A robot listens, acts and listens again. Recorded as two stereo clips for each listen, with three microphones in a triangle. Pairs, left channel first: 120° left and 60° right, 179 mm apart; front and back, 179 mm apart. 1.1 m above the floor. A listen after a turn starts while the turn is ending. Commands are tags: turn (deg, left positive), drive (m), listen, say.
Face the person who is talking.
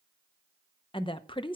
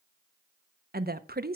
<turn deg="175"/>
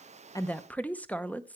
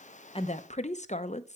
<turn deg="40"/>
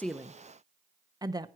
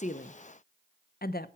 <turn deg="10"/>
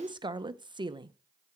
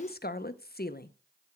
<say>Found it: a woman speaking, straight ahead, under 1 m away.</say>